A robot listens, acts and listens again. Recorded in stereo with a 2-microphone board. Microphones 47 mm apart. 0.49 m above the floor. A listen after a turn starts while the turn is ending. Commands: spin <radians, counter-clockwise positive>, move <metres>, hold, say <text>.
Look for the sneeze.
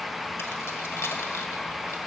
hold
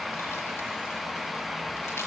hold
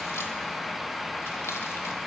say I can't make out a sneeze.